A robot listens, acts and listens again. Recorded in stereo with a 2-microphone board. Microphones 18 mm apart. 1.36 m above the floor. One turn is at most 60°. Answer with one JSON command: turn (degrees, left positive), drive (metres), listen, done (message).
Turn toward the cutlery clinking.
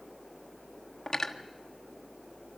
{"turn": 30}
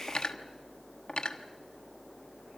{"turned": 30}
{"turn": 60}
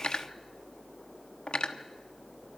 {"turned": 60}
{"turn": 60}
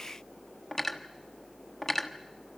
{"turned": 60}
{"turn": 20}
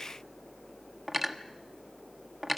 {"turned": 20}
{"done": "Facing the cutlery clinking."}